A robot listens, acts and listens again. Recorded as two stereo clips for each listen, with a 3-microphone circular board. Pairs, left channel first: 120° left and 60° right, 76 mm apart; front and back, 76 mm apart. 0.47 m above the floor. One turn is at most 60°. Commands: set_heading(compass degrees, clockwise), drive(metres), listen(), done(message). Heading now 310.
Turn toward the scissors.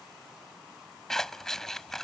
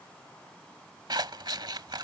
set_heading(10)
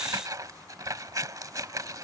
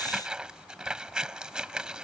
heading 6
set_heading(66)
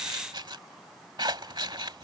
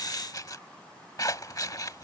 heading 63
set_heading(108)
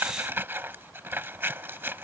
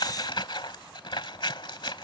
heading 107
done("Facing the scissors.")